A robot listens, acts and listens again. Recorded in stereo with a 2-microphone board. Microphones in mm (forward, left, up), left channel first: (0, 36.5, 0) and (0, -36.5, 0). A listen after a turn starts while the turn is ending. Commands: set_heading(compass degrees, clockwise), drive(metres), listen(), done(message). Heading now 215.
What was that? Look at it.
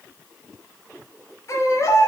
set_heading(170)
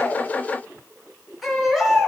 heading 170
done("Facing the baby crying.")